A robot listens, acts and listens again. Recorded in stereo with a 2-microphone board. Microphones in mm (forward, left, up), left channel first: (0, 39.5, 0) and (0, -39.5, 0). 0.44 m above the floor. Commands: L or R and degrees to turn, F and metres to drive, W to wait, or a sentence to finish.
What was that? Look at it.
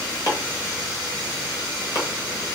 L55
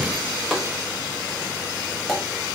L10
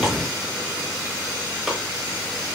W
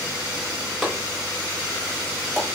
Facing the chopping.